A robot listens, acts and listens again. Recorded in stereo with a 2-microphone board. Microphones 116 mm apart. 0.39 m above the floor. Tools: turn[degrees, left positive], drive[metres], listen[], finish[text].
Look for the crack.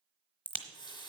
Action: turn[30]
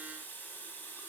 Action: listen[]
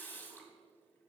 Action: finish[I heard a crack, but can't make it out now. It was about 20° right or 140° left.]